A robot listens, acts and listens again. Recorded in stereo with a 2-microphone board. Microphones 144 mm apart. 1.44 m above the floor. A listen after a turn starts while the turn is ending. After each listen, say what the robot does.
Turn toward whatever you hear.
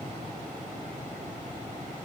Keep listening.
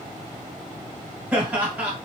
Turn 30° right.
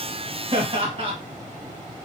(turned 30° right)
Turn 140° right.
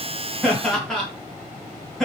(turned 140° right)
Found it: laughter, straight ahead, 1 to 2 m away.